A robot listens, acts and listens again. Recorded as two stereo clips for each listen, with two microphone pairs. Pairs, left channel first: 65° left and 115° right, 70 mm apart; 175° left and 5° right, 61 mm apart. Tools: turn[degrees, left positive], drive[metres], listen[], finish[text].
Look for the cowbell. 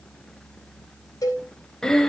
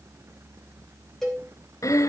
Thought: The cowbell: 95° left.
Action: turn[95]
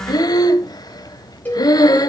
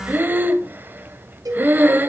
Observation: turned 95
Action: finish[Found it: a cowbell, straight ahead, over 4 m away.]